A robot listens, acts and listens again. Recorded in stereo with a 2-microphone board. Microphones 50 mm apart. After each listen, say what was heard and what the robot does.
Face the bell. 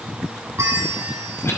The bell: about 70° right or 110° right. Turn 70° right.
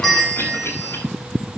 Found it: a bell, straight ahead.